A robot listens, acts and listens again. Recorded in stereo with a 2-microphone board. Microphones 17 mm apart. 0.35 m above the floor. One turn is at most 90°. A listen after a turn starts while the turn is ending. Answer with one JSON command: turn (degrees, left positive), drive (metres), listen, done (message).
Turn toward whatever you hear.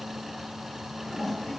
{"turn": 30}
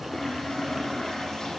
{"turn": 90}
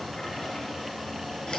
{"turn": 65}
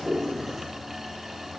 {"listen": true}
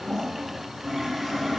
{"done": "Facing the toilet flushing, over 4 m away."}